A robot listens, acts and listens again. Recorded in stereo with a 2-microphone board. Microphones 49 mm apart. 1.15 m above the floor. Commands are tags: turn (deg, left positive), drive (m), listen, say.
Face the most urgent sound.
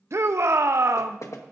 <turn deg="-70"/>
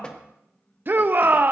<turn deg="-40"/>
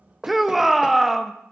<say>Found it: a shout, straight ahead.</say>